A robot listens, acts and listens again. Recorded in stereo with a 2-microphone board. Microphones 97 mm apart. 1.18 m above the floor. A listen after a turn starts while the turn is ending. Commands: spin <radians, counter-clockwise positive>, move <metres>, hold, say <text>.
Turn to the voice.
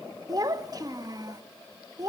spin -0.70
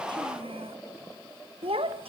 spin -1.75
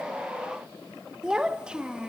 spin -0.17
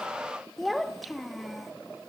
say Facing the child speaking, 1 to 2 m away.